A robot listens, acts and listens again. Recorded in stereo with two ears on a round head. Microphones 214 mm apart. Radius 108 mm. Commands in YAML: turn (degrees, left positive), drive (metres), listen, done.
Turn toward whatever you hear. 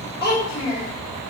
turn: 15
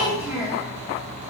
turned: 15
turn: -30
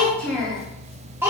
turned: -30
turn: -30
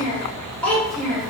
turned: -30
done: "Facing the child speaking."